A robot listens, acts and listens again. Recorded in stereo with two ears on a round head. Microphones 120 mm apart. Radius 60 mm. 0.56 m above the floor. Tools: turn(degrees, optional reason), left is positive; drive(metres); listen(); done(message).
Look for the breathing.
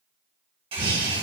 turn(degrees=-90)
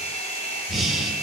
done("Found it: breathing, straight ahead, 1 to 2 m away.")